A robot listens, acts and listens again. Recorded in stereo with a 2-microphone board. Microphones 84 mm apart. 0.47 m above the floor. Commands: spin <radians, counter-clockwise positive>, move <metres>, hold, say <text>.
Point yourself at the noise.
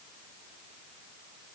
hold
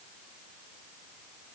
hold
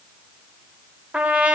spin -0.26
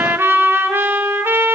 spin -2.62
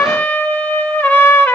spin 0.35
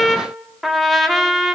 say Found it: a trumpet, straight ahead, under 1 m away.